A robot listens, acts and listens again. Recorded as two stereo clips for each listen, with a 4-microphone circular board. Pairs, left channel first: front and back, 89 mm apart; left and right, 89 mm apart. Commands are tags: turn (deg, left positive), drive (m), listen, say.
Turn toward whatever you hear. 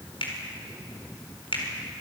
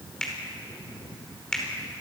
<turn deg="10"/>
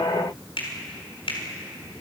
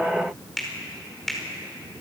<say>Facing the finger snap, over 4 m away.</say>